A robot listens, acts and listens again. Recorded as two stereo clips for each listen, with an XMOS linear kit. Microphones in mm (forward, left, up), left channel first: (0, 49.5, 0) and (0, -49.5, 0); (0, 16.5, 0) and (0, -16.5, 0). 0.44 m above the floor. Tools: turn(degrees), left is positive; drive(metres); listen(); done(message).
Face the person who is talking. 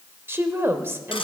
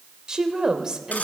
turn(degrees=-25)
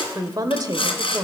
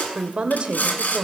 turn(degrees=-125)
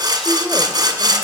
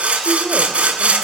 listen()
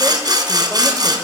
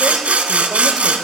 listen()
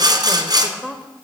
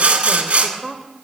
done("Found it: a woman speaking, straight ahead, 1 to 2 m away.")